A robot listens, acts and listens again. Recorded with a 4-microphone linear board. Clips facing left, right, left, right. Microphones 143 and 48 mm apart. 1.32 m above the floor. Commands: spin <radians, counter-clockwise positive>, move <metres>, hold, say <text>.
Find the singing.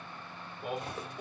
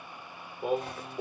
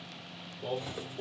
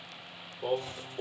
spin -0.79
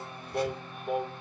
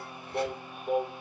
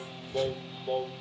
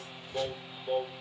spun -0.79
say Found it: singing, straight ahead, under 1 m away.